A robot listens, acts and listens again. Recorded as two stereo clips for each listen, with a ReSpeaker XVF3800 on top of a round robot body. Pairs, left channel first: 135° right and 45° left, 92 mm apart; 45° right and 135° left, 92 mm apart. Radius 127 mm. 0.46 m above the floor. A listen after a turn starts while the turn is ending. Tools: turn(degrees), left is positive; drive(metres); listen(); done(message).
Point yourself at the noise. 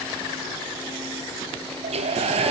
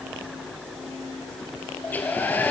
turn(degrees=30)
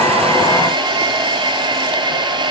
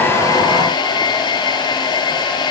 done("Facing the hair dryer.")